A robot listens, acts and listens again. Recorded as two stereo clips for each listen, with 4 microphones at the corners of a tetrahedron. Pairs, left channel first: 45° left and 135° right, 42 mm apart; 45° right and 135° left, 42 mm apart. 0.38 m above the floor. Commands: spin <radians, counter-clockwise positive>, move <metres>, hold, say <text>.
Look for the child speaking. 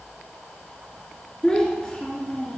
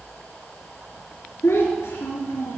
spin -0.44
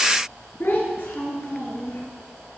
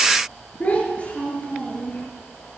spin 0.35
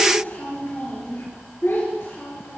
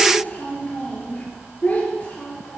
spin 0.26
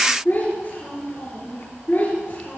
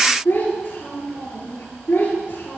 say Found it: a child speaking, straight ahead.